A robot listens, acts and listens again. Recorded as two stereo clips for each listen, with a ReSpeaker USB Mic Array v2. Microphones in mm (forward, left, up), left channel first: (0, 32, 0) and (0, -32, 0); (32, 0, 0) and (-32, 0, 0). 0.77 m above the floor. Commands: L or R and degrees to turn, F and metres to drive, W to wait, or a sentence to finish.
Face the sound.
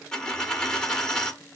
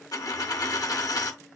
L15
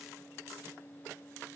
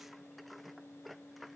I heard a dropped coin from this way, but can't make it out now.